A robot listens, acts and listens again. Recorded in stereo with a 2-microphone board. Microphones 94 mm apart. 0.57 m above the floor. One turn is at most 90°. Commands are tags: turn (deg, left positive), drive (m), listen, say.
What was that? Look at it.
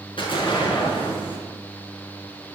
<turn deg="65"/>
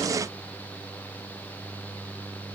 <listen/>
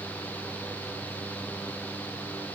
<say>I heard an explosion, but can't make it out now. It was about straight ahead or 50° left.</say>